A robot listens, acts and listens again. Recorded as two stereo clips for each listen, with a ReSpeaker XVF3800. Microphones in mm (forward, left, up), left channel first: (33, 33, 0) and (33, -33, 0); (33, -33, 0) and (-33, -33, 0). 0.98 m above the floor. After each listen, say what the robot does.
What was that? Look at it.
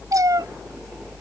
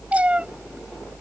Turn 110° right.
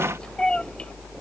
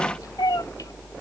Turn 15° left.
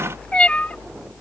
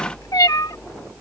Turn 20° left.
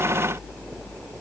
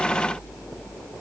Keep listening.
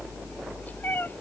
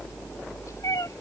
Turn 30° left.
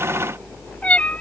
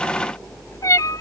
Turn 20° left.
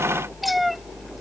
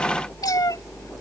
Facing the cat meowing.